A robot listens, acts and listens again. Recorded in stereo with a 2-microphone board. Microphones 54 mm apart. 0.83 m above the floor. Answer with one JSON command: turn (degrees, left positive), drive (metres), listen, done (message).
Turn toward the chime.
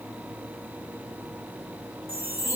{"turn": -45}
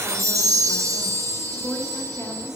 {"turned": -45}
{"turn": -90}
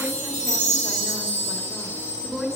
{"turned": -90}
{"turn": 25}
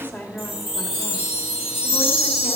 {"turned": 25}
{"done": "Found it: a chime, straight ahead."}